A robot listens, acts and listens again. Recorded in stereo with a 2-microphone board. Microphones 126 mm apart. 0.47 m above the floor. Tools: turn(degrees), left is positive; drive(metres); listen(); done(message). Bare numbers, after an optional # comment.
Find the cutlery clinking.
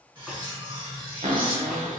# The cutlery clinking: about 40° right or 140° right.
turn(-40)
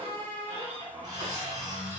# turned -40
listen()
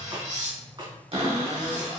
# So it is at 100° right.
turn(-100)
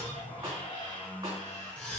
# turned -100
# The cutlery clinking is now 10° left.
turn(10)
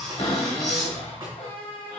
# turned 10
done("Found it: cutlery clinking, straight ahead.")